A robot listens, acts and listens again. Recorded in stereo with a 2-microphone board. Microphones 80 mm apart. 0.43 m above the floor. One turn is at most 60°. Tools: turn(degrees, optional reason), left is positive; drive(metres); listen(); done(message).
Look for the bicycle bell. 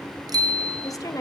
turn(degrees=-55, reason="The bicycle bell: about 55° right or 125° right.")
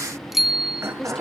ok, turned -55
done("Facing the bicycle bell.")